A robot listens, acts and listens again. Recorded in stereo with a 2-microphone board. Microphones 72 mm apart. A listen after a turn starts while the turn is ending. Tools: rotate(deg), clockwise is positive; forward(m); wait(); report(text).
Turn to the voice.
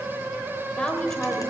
rotate(-30)
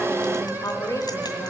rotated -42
rotate(-125)
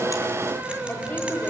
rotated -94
rotate(-30)
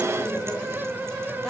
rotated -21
report("Facing the woman speaking.")